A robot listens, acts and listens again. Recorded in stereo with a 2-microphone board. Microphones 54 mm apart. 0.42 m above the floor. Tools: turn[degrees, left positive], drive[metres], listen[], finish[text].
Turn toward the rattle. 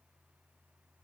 Action: listen[]
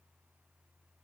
Action: listen[]
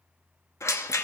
Thought: The rattle: about 60° left or 120° left.
Action: turn[60]
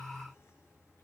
Action: listen[]
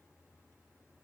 Action: listen[]
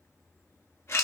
Thought: So it is at 55° left.
Action: turn[55]
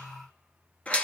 Thought: The rattle is now 25° left.
Action: turn[25]
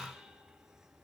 Action: listen[]
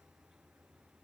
Action: listen[]
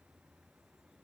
Action: finish[Facing where the rattle came from. I can't hear it now.]